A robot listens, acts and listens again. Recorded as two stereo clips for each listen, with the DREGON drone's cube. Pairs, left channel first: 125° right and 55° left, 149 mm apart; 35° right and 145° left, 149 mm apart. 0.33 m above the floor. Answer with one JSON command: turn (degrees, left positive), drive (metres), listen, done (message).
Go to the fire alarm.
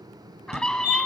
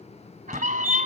{"turn": 30}
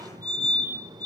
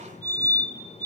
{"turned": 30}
{"drive": 1.0}
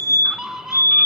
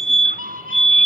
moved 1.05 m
{"turn": -10}
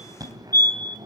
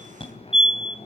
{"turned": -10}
{"drive": 1.0}
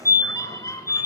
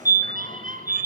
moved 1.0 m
{"drive": 1.0}
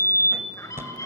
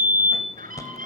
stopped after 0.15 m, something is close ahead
{"done": "Arrived at the fire alarm, straight ahead."}